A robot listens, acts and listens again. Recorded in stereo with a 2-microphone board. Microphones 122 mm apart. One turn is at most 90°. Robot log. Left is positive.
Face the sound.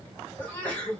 cmd yaw +30
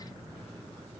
cmd idle
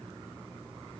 end: I heard a sneeze, but can't make it out now. It was about 20° right or 140° left.